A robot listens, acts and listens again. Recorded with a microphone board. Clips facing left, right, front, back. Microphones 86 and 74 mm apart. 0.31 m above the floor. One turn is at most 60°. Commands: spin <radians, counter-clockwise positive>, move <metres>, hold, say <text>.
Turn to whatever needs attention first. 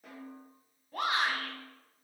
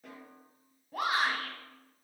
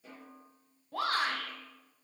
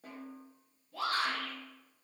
say Found it: a shout, straight ahead, 1 to 2 m away.